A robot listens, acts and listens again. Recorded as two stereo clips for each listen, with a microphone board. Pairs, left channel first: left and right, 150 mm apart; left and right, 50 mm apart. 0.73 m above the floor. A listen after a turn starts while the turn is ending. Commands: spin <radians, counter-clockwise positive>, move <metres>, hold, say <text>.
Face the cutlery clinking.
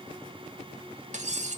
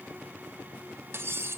spin -0.96
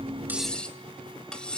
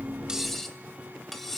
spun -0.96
say Facing the cutlery clinking.